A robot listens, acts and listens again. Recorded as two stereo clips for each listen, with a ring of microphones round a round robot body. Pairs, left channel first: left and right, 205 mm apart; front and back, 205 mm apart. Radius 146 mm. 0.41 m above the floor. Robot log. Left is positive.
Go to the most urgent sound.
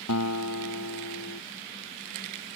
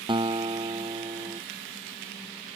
cmd idle
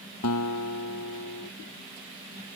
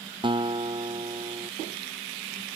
cmd idle
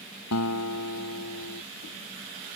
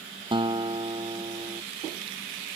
end: I can't make out anything urgent, only a guitar.